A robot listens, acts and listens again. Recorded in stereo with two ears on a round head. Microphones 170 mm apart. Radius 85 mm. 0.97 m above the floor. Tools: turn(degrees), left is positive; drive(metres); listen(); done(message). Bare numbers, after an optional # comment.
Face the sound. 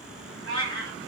# The cat meowing: about 65° right or 115° right.
turn(-65)
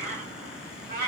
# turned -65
# So it is at 50° right.
turn(-50)
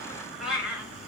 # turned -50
done("Found it: a cat meowing, straight ahead, 1 to 2 m away.")